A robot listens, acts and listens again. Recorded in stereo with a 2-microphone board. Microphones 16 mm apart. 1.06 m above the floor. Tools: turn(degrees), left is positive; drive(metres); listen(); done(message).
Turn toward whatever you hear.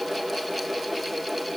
listen()
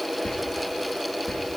turn(degrees=55)
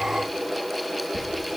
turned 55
done("Facing the whispering.")